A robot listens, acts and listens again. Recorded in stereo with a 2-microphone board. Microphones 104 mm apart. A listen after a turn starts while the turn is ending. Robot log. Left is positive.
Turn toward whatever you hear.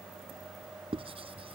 note: The writing: about 65° right or 115° right.
cmd yaw -65
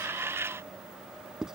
end: Found it: writing, straight ahead.